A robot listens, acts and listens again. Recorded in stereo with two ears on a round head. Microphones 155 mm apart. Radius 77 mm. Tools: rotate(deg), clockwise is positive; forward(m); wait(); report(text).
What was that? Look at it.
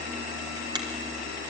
rotate(25)
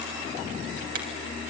rotate(125)
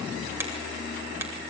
rotate(15)
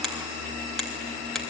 report("Facing the finger snap, 2 to 4 m away.")